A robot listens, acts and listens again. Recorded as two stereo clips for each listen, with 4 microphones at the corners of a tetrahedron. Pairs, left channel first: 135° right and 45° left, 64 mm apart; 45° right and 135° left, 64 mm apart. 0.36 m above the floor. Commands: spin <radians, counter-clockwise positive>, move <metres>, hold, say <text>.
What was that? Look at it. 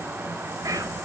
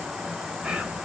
spin 1.13
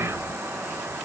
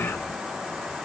spin 0.17
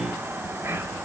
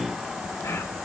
say Facing the whispering, over 4 m away.